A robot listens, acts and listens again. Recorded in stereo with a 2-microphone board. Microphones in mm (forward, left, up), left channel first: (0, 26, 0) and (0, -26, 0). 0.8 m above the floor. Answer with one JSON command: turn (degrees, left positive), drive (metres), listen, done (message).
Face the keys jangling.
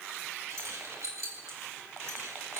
{"turn": -90}
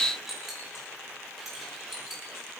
{"done": "Facing the keys jangling."}